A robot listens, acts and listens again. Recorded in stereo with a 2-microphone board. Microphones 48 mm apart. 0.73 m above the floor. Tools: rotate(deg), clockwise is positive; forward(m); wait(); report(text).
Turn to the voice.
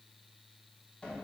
wait()
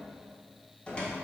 wait()
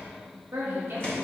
rotate(55)
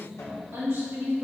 rotate(65)
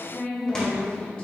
rotate(-25)
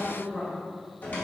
report("Found it: a woman speaking, straight ahead.")